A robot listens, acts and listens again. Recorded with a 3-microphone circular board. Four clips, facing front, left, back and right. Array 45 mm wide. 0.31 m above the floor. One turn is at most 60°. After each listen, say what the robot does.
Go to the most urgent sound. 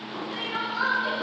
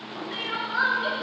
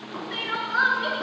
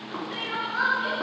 Turn 60° left.
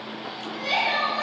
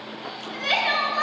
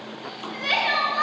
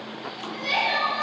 Turn 60° left.
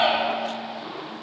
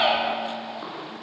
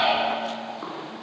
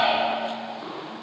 Turn 60° left.
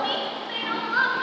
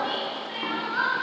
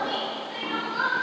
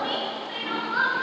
Turn 10° right.
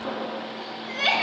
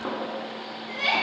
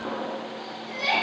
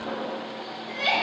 Drive 1.0 m forward.
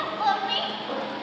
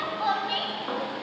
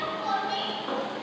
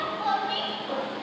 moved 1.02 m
Turn 20° left.
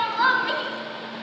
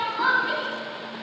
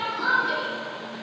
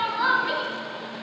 Drive 1.0 m forward.
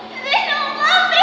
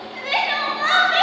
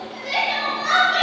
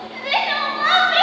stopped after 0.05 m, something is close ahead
Turn 10° right.
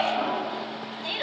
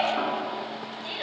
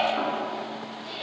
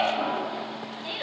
Arrived at the crying, straight ahead.